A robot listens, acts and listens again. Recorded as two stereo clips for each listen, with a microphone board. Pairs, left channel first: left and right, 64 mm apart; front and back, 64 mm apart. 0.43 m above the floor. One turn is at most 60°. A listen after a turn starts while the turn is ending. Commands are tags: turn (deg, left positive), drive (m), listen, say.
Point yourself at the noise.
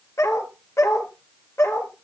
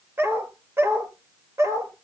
<turn deg="60"/>
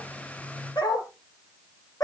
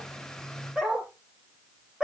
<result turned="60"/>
<turn deg="60"/>
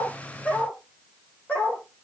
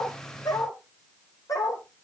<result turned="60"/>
<turn deg="25"/>
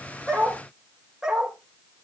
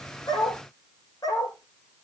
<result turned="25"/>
<say>Found it: a dog barking, straight ahead, over 4 m away.</say>